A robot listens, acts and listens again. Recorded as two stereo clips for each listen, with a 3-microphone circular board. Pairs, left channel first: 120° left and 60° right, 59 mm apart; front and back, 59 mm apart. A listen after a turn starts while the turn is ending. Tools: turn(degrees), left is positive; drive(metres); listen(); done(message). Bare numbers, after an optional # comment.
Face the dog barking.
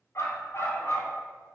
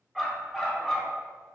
# The dog barking: 80° left.
turn(80)
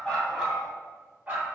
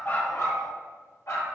done("Facing the dog barking, 2 to 4 m away.")